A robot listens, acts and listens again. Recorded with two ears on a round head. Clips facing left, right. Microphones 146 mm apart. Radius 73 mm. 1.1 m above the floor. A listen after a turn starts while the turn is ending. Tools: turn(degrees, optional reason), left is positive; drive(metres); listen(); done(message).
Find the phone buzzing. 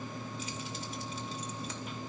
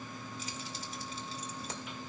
listen()
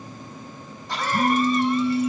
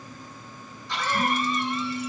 turn(degrees=50, reason="The phone buzzing: about 50° left or 130° left.")
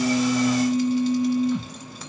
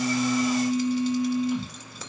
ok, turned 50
turn(degrees=85, reason="So it is at 85° left.")
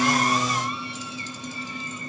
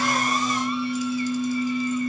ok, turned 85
done("Found it: a phone buzzing, straight ahead, over 4 m away.")